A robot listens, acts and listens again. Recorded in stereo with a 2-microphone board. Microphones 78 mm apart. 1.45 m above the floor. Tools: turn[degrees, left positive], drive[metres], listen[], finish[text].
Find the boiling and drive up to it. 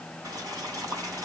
Thought: The boiling: about 50° right or 130° right.
Action: turn[-50]
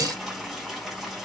Action: drive[1.0]
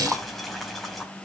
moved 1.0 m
Action: drive[1.0]
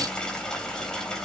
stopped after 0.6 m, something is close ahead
Thought: The boiling is now 10° left.
Action: turn[10]
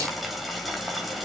Action: finish[Blocked. The boiling is further on, straight ahead.]